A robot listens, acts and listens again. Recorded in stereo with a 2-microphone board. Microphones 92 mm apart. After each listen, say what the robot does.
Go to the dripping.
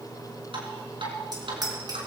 Turn 90° right.
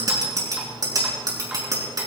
Keep listening.
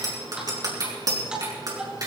Turn 10° right.
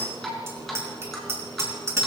Drive 1.0 m forward.
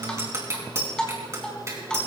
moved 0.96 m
Turn 10° left.
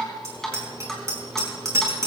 Drive 1.0 m forward.
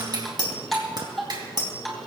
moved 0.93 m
Drive 1.0 m forward.
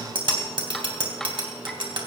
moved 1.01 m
Turn 10° left.
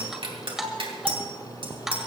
Drive 1.0 m forward.
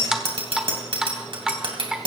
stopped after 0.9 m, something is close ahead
Arrived at the dripping, straight ahead.